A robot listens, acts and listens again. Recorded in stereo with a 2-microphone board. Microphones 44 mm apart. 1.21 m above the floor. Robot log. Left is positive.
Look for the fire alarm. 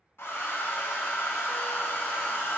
cmd idle
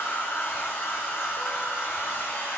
cmd idle
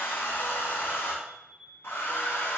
note: The fire alarm: about 15° right or 165° right.
cmd yaw -15
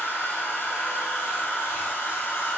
cmd idle
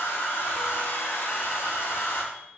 end: Facing the fire alarm.